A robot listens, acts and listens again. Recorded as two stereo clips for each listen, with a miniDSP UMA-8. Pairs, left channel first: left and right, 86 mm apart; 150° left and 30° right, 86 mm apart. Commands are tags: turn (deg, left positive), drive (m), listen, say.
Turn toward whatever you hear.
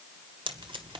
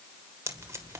<turn deg="-90"/>
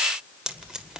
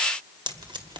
<turn deg="-10"/>
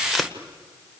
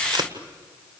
<say>Found it: tape being pulled, straight ahead.</say>